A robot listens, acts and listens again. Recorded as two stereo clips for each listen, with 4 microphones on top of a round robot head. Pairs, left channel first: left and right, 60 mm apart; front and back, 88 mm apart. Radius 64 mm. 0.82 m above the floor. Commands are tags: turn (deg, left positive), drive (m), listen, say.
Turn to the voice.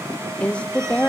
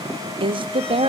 <turn deg="165"/>
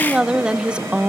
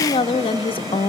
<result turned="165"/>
<turn deg="-15"/>
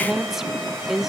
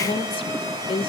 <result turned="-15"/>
<say>Found it: a woman speaking, straight ahead, under 1 m away.</say>